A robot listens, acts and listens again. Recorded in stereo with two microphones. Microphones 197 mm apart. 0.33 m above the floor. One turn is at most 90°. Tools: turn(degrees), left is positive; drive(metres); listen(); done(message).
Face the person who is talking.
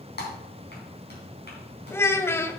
turn(degrees=30)
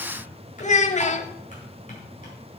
turn(degrees=90)
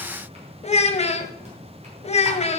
turn(degrees=40)
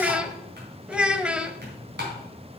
done("Found it: a child speaking, straight ahead.")